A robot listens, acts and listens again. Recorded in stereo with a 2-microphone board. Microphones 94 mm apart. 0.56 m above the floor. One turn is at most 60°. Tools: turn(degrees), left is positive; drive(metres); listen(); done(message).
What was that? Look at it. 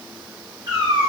turn(degrees=-45)
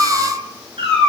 turn(degrees=-60)
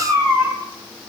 turn(degrees=-20)
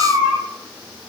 turn(degrees=10)
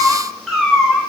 done("Found it: a cat meowing, straight ahead, 2 to 4 m away.")